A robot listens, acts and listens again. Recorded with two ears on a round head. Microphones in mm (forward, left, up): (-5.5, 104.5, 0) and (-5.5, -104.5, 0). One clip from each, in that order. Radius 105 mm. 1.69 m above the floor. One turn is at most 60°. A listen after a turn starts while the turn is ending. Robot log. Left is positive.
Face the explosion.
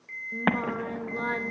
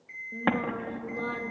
note: The explosion: about 15° left or 165° left.
cmd yaw +15
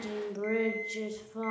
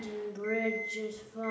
cmd idle
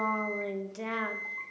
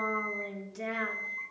end: I heard an explosion, but can't make it out now. It was about straight ahead or 150° left.